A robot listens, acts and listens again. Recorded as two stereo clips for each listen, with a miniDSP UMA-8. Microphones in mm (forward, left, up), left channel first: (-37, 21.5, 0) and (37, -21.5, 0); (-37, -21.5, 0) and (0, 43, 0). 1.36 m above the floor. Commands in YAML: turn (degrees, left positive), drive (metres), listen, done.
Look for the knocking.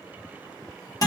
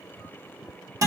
listen: true
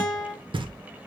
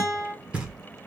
turn: -15
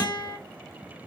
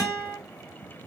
listen: true
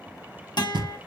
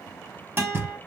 done: "Found it: knocking, straight ahead."